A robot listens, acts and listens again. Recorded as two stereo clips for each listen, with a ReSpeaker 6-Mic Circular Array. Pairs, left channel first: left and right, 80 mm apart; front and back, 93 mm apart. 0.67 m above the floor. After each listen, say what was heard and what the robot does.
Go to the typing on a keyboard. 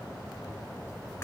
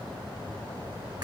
Keep listening.
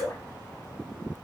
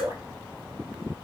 Keep listening.
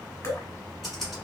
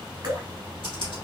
The typing on a keyboard: straight behind. Turn 180° left.
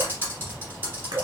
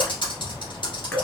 The typing on a keyboard is now 25° right. Turn 25° right.
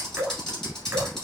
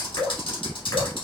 The typing on a keyboard is now 10° left. Turn 10° left.
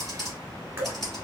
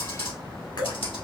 Drive 1.0 m forward.
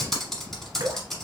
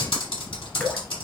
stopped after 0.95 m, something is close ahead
Arrived at the typing on a keyboard, straight ahead.